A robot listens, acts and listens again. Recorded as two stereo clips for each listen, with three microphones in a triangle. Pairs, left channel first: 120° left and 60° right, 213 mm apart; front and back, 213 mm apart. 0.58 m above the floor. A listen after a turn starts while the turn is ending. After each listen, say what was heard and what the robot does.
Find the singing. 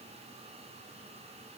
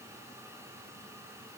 Keep listening.
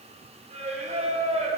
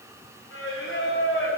Found it: singing, straight ahead.